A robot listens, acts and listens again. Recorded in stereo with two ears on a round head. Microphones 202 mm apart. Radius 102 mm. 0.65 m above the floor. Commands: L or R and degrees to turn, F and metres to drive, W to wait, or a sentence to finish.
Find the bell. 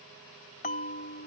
L35
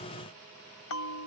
L110
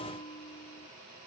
L25
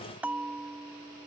Facing the bell.